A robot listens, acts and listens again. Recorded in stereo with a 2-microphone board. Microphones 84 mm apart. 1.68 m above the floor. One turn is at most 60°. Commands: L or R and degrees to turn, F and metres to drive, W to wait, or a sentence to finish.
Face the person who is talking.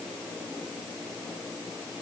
W
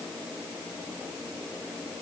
W
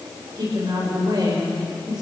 R60
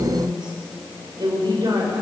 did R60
R60
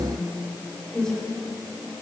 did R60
Facing the woman speaking.